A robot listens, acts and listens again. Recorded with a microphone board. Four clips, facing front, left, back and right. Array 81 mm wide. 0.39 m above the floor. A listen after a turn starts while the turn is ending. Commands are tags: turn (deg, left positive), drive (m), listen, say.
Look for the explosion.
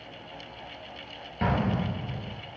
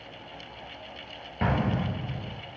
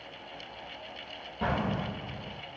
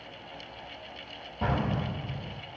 <turn deg="65"/>
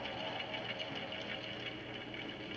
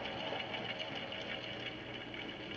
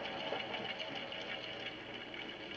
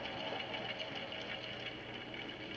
<say>Facing where the explosion came from. I can't hear it now.</say>